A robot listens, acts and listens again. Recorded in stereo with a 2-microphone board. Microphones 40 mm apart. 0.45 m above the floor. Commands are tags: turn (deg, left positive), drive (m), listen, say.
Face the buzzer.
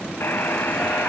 <turn deg="70"/>
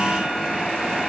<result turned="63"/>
<listen/>
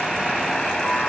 <turn deg="10"/>
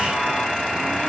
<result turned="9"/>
<say>Facing the buzzer, 1 to 2 m away.</say>